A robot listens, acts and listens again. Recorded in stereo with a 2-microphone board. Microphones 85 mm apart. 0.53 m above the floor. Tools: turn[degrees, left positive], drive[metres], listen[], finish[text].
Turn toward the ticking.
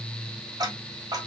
Thought: The ticking: about 45° right or 135° right.
Action: turn[-45]
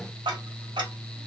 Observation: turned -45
Thought: So it is at 80° right.
Action: turn[-80]
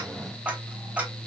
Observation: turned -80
Thought: The ticking is now 20° right.
Action: turn[-20]
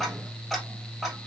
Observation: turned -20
Action: finish[Found it: ticking, straight ahead, 2 to 4 m away.]